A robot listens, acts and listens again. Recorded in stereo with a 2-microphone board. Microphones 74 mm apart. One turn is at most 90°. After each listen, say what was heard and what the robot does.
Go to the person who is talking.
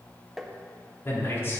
The man speaking: about 35° left or 145° left. Turn 35° left.
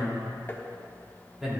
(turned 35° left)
Drive 1.0 m forward.
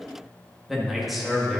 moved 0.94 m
Drive 1.0 m forward.
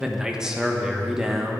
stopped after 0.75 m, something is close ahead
The man speaking is now 10° right. Turn 10° right.
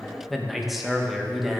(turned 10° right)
Arrived at the man speaking, straight ahead.